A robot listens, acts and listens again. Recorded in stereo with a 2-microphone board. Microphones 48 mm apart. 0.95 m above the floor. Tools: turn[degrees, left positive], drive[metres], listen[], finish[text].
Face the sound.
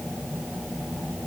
Action: listen[]
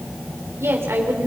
Thought: The woman speaking: about 65° right or 115° right.
Action: turn[-65]
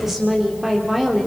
Action: finish[Found it: a woman speaking, straight ahead.]